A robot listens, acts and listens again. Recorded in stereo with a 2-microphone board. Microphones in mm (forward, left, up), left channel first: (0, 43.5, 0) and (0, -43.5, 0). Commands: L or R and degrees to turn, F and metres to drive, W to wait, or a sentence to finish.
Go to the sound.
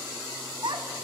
R65
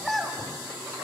F1.0
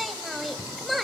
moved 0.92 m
F1.0
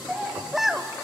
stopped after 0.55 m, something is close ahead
Arrived at the child speaking, straight ahead.